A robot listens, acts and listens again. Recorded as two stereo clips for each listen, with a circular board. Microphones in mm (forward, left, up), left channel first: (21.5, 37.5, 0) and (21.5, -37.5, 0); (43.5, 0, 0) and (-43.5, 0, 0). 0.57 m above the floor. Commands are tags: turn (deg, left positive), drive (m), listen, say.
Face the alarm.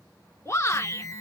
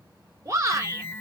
<turn deg="60"/>
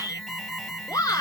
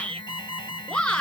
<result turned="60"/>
<say>Found it: an alarm, straight ahead.</say>